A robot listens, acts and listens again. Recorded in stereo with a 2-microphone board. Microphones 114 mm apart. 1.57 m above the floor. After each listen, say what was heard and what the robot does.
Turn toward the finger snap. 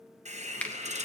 Turn 30° left.
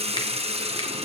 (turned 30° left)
Keep listening.
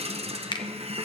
So it is at 135° left. Turn 135° left.
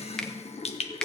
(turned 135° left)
Found it: a finger snap, straight ahead, 1 to 2 m away.